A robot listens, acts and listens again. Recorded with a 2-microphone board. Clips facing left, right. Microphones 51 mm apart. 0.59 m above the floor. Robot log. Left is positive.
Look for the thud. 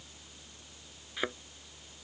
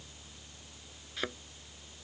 cmd yaw +30
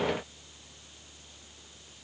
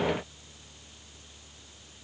cmd idle
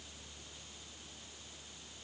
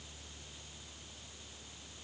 end: I heard a thud, but can't make it out now. It was about 15° right or 135° left.